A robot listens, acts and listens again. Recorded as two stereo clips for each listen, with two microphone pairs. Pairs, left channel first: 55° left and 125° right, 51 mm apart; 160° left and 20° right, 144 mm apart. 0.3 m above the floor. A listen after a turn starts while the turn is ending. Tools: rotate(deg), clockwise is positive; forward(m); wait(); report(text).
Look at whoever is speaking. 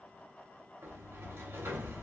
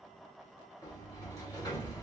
wait()
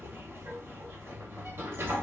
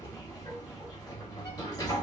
wait()
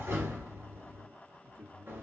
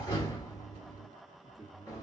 rotate(110)
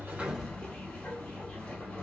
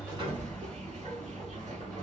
wait()
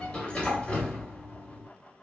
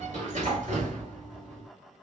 wait()
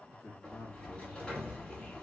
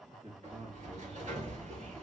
rotate(-25)
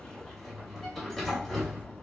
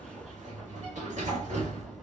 wait()
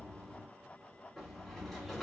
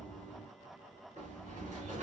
wait()
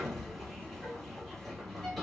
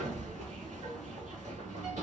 report("Facing where the man speaking came from. I can't hear it now.")